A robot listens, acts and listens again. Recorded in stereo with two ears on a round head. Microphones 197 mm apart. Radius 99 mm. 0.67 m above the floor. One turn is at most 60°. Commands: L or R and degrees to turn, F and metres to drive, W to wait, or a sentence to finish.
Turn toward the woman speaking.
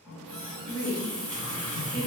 L60
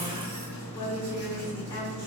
L30
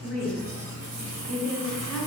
Found it: a woman speaking, straight ahead.